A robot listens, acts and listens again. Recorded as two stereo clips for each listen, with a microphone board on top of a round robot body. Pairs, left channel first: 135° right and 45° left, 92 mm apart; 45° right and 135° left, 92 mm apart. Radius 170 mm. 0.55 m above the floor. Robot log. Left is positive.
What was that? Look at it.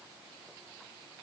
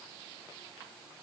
cmd idle
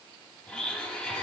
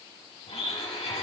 note: The blender: 55° right.
cmd yaw -55
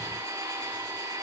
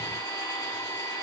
end: Found it: a blender, straight ahead.